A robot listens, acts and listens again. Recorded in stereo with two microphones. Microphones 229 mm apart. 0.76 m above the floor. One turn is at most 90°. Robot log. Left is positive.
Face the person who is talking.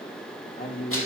note: The man speaking: about 45° left or 135° left.
cmd yaw +45
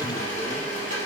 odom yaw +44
cmd idle
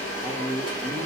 end: Found it: a man speaking, straight ahead, 2 to 4 m away.